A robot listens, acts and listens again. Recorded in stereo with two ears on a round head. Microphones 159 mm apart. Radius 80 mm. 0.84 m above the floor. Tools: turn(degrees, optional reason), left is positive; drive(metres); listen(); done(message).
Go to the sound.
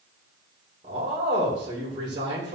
turn(degrees=-30, reason="The man speaking: about 30° right or 150° right.")
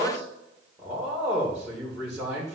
drive(metres=1.0)
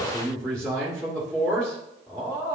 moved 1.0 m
drive(metres=1.0)
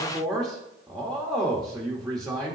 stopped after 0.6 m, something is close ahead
done("I am next to the man speaking.")